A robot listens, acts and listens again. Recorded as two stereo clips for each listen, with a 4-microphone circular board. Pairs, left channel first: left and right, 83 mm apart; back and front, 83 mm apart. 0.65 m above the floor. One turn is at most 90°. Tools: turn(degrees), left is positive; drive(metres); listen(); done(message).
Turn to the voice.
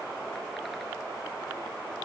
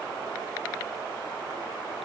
listen()
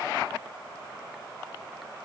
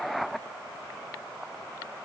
listen()
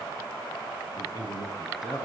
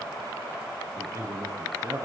turn(degrees=45)
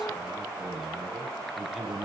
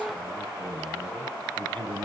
turn(degrees=-10)
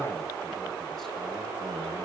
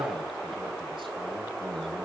listen()
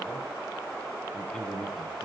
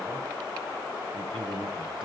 done("Facing the man speaking.")